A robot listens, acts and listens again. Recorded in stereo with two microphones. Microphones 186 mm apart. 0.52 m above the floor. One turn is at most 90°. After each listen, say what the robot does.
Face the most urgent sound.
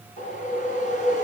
Keep listening.
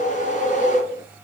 Keep listening.
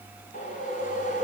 I can't make out anything urgent to turn to.